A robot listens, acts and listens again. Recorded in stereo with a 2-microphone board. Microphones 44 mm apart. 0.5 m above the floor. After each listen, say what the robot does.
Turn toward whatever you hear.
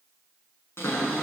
Turn 90° left.
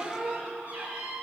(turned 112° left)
Turn 30° right.
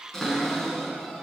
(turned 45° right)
Turn 15° left.
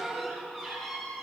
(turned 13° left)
Found it: a cupboard door, straight ahead, over 4 m away.